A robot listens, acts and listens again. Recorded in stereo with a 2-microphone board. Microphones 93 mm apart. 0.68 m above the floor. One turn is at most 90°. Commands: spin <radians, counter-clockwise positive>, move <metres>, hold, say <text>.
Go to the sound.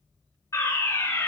spin 0.61
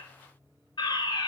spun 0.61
spin 1.57
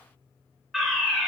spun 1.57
move 1.0
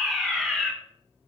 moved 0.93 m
move 1.0
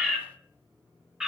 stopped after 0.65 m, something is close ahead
spin -0.17
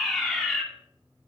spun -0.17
say Arrived at the fire alarm, straight ahead.